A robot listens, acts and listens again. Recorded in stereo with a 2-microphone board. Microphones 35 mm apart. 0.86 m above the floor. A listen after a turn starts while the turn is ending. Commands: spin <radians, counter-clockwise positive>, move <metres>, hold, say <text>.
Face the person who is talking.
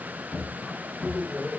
spin 1.57
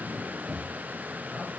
hold
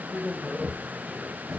say Found it: a man speaking, straight ahead.